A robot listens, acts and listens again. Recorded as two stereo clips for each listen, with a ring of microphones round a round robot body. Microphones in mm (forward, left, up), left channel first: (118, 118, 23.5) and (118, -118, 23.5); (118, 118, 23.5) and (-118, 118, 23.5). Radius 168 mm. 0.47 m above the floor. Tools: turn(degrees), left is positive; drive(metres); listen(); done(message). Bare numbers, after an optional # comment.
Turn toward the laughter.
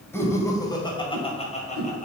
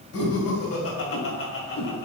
# The laughter: 30° left.
turn(30)
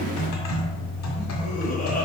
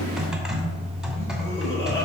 # The laughter is now 40° left.
turn(40)
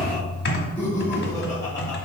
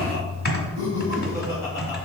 # The laughter is now 15° left.
turn(15)
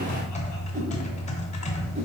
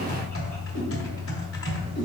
listen()
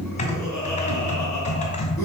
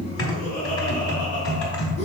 done("Facing the laughter.")